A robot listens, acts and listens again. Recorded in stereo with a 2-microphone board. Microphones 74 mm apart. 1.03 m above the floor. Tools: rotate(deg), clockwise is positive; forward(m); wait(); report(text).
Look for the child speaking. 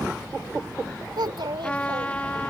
rotate(90)
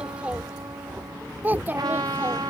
rotate(25)
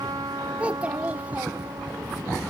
rotate(20)
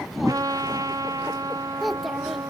report("Found it: a child speaking, straight ahead.")